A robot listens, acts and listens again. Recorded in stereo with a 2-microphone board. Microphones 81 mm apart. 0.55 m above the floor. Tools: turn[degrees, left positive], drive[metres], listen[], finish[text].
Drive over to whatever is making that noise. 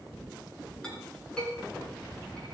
Action: turn[30]
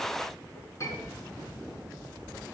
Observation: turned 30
Thought: So it is at 140° left.
Action: turn[140]
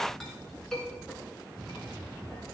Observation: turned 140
Action: drive[1.0]
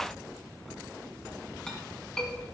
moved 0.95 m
Thought: The clink is now 10° left.
Action: turn[10]
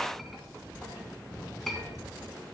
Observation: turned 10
Action: drive[1.0]
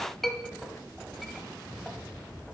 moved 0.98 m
Action: drive[1.0]
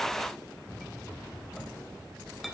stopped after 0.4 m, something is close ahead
Action: finish[I am next to the clink.]